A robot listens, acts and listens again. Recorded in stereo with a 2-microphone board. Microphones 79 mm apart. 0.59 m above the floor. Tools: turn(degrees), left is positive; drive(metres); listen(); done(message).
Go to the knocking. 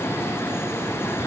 listen()
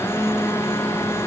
listen()
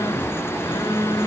done("I can't make out knocking, only a phone buzzing.")